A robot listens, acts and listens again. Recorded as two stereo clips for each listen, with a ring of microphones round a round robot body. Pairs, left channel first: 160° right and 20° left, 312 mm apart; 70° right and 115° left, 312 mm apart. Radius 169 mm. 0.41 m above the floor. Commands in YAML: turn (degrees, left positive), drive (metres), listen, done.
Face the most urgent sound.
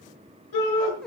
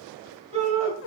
turn: -175
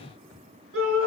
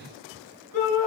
turn: -30
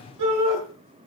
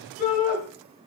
done: "Found it: a shout, straight ahead."